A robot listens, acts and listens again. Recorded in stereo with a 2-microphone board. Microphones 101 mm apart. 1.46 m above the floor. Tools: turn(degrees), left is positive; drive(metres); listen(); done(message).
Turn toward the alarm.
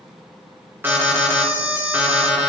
turn(degrees=-20)
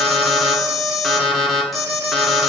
done("Found it: an alarm, straight ahead.")